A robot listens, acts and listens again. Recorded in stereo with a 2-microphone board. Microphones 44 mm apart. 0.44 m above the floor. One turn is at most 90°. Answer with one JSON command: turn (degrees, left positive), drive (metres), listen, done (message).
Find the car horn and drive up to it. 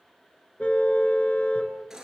{"turn": 30}
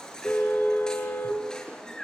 {"turn": 90}
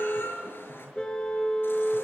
{"turn": 20}
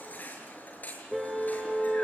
{"drive": 1.0}
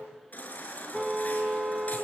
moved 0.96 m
{"drive": 1.0}
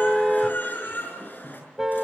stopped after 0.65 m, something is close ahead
{"turn": -10}
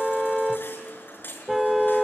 {"done": "I am next to the car horn."}